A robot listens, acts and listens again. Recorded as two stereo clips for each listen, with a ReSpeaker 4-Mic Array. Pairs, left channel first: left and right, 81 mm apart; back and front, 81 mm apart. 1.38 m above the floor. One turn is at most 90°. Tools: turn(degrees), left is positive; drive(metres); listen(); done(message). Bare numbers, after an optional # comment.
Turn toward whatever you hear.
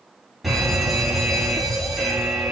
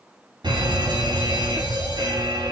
done("Facing the fire alarm, over 4 m away.")